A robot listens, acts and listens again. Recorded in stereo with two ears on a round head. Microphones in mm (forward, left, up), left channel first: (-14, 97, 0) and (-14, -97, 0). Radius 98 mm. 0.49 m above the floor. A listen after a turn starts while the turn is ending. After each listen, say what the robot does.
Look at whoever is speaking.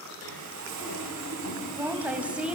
Turn 30° right.
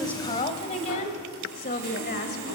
Turn 45° left.
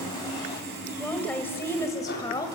Turn 15° left.
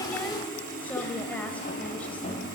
Facing the woman speaking, 1 to 2 m away.